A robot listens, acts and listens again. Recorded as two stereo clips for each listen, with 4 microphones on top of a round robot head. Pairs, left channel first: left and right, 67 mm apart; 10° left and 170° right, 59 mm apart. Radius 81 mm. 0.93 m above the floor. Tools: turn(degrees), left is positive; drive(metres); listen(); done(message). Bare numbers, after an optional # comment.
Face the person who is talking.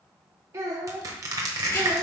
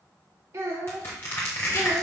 # The child speaking: 135° right.
turn(-135)
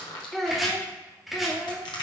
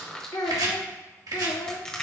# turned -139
done("Facing the child speaking.")